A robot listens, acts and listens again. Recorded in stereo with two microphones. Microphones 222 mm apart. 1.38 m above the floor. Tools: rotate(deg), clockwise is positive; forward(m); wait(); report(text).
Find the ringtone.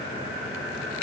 wait()
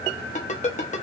rotate(-35)
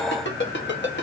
rotate(-105)
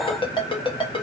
rotate(-25)
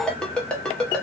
report("Facing the ringtone, under 1 m away.")